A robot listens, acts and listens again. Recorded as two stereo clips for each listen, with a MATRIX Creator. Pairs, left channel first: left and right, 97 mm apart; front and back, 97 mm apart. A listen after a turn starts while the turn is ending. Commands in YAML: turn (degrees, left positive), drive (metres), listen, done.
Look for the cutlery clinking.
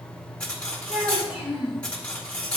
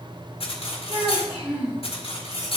turn: 15
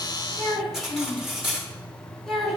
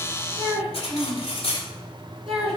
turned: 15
done: "Found it: cutlery clinking, straight ahead."